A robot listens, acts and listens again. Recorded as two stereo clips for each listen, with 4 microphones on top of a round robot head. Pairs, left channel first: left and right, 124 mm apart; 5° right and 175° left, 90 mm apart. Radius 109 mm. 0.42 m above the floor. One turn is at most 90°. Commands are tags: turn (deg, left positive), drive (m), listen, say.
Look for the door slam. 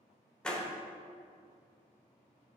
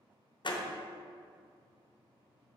<say>Facing the door slam.</say>